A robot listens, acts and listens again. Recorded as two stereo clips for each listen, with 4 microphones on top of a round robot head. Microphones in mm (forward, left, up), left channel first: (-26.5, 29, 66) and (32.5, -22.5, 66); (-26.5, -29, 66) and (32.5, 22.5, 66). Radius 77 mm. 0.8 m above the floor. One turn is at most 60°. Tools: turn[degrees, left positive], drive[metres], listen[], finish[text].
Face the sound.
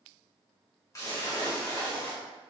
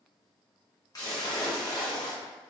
Thought: The splash: 175° right.
Action: turn[-60]
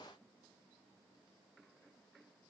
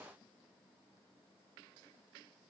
Thought: Nothing new. It was at 115° right.
Action: turn[-60]
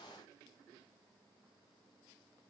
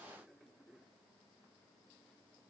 Thought: Nothing new. It was at 55° right.
Action: turn[-55]
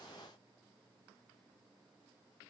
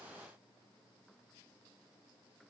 Action: finish[I heard a splash from this way, but can't make it out now.]